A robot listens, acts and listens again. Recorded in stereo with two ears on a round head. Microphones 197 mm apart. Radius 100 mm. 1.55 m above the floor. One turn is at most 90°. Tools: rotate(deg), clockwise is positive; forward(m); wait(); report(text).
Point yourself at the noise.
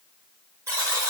rotate(30)
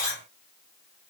rotate(-15)
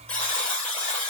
report("Facing the buzzer, 1 to 2 m away.")